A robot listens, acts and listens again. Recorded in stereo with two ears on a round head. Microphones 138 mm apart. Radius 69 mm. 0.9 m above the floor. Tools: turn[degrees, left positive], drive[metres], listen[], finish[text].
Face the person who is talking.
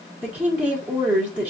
Action: turn[-30]
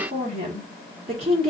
Thought: So it is at 135° right.
Action: turn[-135]
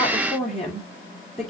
Action: finish[Found it: a woman speaking, straight ahead.]